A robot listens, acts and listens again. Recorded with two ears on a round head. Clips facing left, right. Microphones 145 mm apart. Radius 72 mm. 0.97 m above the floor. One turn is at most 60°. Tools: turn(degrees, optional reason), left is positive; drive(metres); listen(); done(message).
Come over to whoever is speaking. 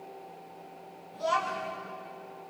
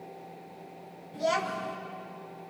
turn(degrees=-20, reason="The child speaking: about 20° right or 160° right.")
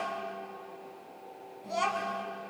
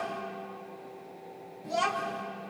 drive(metres=1.0)
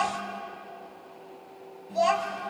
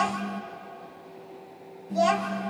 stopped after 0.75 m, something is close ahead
done("Something is in my way. I am facing the child speaking but have not reached it.")